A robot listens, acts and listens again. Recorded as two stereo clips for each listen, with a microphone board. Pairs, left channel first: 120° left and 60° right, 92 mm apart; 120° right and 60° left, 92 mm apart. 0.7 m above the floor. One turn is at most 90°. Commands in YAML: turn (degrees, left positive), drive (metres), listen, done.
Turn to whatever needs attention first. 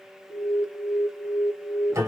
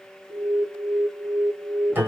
turn: 70
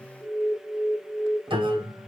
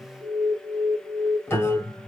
turn: 10
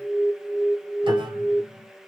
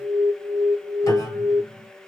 done: "Found it: an alarm, straight ahead, 2 to 4 m away."